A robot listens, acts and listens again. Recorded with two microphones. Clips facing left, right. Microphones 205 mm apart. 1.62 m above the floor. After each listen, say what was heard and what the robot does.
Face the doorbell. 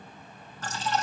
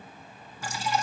Keep listening.
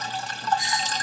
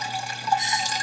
The doorbell: about 20° right or 160° right. Turn 20° right.
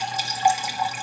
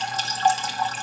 Keep listening.
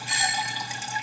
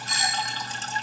So it is at 135° right. Turn 135° right.
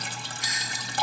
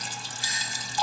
The doorbell is now 30° right. Turn 30° right.
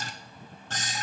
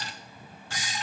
The doorbell is now 10° right. Turn 10° right.
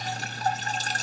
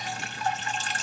Keep listening.
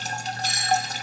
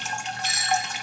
Found it: a doorbell, straight ahead.